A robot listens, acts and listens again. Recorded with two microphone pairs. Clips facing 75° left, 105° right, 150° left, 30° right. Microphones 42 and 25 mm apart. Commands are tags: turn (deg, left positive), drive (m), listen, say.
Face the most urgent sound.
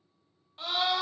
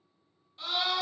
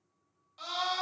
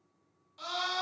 <turn deg="75"/>
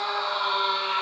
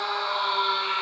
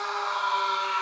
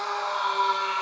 <turn deg="20"/>
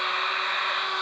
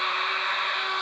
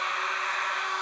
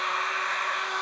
<say>Facing the scream.</say>